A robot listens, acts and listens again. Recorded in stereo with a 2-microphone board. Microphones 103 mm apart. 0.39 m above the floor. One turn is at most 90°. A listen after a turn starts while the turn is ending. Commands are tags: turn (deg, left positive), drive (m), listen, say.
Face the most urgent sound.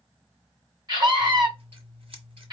<turn deg="-40"/>
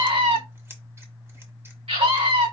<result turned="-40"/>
<turn deg="-90"/>
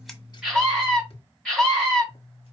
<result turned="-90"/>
<say>Facing the scream.</say>